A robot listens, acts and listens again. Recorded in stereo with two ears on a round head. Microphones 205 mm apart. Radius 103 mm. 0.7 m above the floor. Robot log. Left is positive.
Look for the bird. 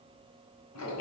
cmd idle
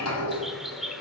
cmd yaw +30
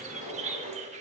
note: So it is at 30° right.
cmd yaw -30
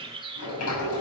note: The bird is now 20° right.
cmd yaw -20
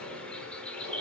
end: Found it: a bird, straight ahead, 1 to 2 m away.